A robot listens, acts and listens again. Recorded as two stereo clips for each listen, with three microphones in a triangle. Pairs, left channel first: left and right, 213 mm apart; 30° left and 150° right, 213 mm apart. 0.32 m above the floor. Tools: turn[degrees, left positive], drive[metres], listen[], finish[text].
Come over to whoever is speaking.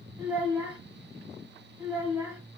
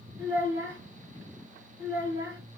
Thought: The child speaking: 165° right.
Action: turn[-165]
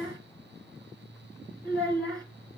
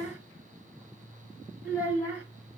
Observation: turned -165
Thought: The child speaking is now 20° right.
Action: turn[-20]
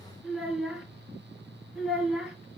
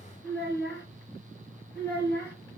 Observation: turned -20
Action: drive[1.0]
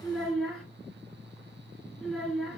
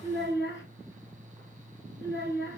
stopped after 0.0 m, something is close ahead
Action: finish[Blocked. The child speaking is further on, straight ahead.]